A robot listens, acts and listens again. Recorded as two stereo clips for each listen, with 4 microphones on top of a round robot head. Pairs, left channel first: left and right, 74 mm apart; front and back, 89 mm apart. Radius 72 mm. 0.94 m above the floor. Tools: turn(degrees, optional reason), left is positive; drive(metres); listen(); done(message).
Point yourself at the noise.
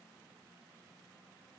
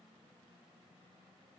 listen()
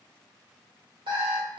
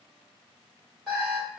turn(degrees=-90, reason="The alarm clock: 90° right.")
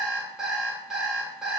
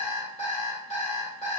done("Facing the alarm clock, 1 to 2 m away.")